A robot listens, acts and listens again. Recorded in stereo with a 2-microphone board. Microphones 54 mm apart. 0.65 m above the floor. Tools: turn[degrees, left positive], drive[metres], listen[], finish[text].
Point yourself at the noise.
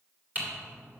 Thought: The typing on a keyboard: about 30° right or 150° right.
Action: turn[-30]
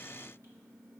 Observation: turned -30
Action: listen[]
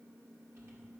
Action: listen[]
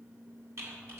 Thought: So it is at 115° right.
Action: turn[-115]
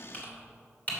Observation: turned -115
Thought: The typing on a keyboard is now 30° left.
Action: turn[30]
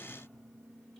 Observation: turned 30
Action: listen[]
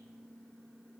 Action: listen[]
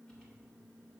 Action: finish[I heard typing on a keyboard from this way, but can't make it out now.]